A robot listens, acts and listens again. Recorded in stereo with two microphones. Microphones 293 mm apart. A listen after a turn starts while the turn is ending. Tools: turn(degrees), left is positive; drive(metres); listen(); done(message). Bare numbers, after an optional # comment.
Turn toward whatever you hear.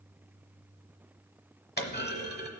# The clunk: about 35° left or 145° left.
turn(35)
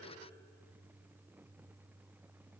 listen()
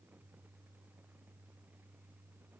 done("I heard a clunk, but can't make it out now. It was about straight ahead or 110° left.")